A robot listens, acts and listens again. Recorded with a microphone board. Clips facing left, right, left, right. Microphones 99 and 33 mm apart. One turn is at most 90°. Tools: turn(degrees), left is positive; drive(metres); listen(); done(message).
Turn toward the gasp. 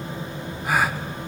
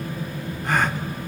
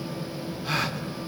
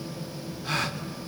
turn(degrees=30)
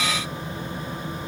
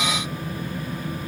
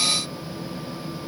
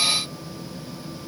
listen()
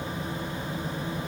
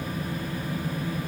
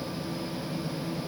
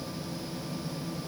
done("I heard a gasp, but can't make it out now. It was about 25° right or 145° left.")